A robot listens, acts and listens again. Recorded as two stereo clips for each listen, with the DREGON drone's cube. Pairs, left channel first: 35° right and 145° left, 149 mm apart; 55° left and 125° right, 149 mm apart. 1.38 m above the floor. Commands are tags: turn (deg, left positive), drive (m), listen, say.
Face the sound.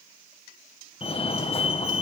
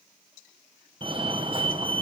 <turn deg="-75"/>
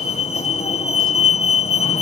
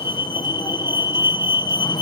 <say>Found it: a fire alarm, straight ahead, 2 to 4 m away.</say>